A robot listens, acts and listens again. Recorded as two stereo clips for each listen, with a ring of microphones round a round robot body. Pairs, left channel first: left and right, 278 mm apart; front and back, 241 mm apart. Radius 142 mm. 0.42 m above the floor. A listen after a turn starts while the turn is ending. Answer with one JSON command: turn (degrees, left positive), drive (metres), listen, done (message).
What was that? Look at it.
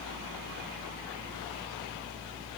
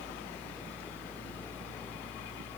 {"listen": true}
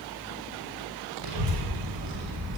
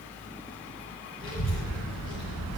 {"turn": -90}
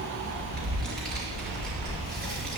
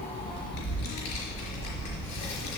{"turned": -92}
{"done": "Facing the child speaking, over 4 m away."}